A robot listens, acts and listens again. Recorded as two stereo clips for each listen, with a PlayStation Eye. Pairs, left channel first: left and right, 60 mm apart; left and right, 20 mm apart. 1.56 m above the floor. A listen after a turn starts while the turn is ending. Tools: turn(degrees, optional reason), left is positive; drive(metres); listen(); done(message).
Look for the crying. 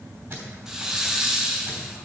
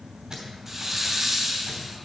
listen()
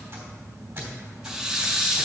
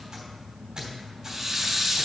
listen()
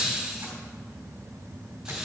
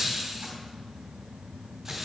done("I can't make out crying, only a squeak and a hiss.")